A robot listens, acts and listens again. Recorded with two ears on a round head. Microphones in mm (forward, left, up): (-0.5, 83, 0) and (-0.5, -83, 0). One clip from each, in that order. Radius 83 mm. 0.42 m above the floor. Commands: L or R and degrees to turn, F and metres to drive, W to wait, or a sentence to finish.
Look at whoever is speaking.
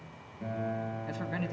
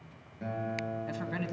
R30
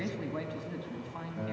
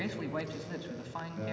R145
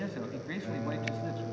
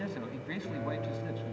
R10
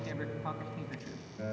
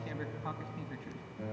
Facing the man speaking.